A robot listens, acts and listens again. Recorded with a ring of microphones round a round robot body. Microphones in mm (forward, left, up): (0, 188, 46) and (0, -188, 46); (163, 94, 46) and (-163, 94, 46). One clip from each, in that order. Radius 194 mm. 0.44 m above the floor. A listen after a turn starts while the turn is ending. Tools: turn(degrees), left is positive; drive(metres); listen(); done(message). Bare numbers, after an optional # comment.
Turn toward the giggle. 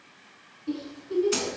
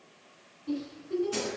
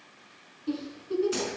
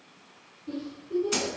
# The giggle: 10° left.
turn(10)
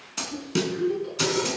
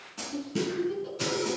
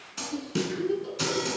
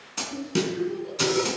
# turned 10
done("Facing the giggle.")